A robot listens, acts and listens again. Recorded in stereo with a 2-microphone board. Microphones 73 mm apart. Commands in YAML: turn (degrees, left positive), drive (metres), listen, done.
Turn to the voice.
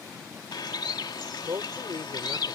turn: -50
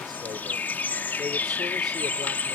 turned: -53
listen: true
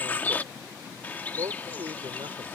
turn: -75
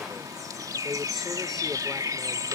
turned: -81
listen: true
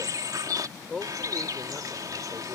done: "Found it: a man speaking, straight ahead."